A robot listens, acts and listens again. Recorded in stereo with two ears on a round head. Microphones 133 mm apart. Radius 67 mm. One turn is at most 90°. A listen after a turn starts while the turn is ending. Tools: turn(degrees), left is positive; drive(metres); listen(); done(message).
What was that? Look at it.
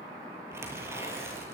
turn(degrees=-20)
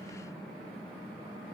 listen()
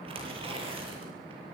turn(degrees=-90)
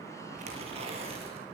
turn(degrees=-40)
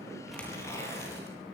turn(degrees=20)
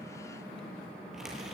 done("Found it: tearing paper, straight ahead, over 4 m away.")